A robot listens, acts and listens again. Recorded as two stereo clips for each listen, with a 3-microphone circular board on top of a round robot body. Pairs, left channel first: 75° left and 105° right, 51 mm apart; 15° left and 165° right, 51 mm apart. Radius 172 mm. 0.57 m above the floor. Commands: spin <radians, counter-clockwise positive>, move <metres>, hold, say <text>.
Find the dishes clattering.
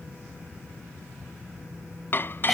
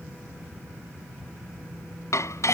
spin 0.52
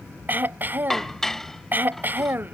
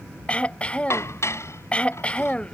spin -0.17
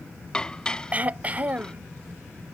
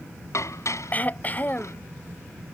say Found it: dishes clattering, straight ahead.